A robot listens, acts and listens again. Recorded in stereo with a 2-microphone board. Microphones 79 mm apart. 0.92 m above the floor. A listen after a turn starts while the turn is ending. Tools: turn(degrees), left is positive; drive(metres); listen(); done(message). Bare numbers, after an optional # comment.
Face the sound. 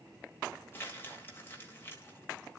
# The crumpling: about 30° left or 150° left.
turn(30)
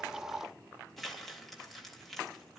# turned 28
done("Facing the crumpling.")